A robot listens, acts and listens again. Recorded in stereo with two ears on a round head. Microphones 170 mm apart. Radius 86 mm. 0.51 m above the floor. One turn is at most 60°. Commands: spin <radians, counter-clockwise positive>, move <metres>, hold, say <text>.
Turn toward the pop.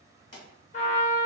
spin 0.70
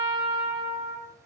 hold
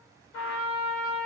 say I heard a pop, but can't make it out now. It was about straight ahead or 100° left.